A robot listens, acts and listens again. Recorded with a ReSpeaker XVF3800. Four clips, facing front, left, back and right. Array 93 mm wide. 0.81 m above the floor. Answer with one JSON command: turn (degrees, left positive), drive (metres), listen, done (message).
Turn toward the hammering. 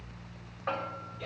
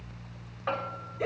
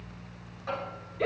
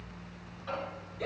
{"turn": 60}
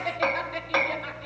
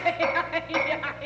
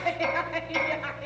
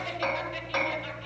{"done": "Found it: hammering, straight ahead."}